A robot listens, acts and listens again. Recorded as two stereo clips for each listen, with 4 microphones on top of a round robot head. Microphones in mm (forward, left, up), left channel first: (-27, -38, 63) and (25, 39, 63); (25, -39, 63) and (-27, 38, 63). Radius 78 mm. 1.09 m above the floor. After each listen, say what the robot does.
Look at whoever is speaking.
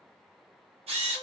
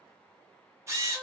Keep listening.
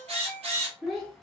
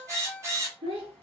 Turn 145° left.
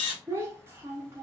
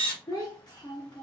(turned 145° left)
Turn 10° right.
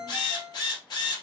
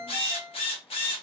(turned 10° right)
Keep listening.
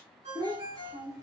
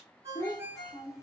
Found it: a child speaking, straight ahead, under 1 m away.